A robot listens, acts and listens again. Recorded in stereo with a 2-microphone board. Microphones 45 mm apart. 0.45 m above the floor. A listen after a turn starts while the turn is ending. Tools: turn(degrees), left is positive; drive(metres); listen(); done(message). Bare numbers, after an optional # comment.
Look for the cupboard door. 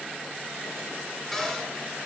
turn(30)
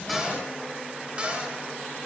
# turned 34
# So it is at 30° right.
turn(-30)
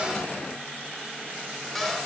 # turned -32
done("Found it: a cupboard door, straight ahead, 2 to 4 m away.")